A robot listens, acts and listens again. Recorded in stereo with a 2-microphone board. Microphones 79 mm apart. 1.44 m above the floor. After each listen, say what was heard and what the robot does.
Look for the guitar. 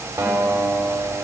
The guitar: about 25° right or 155° right. Turn 25° right.
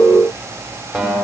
Found it: a guitar, straight ahead, over 4 m away.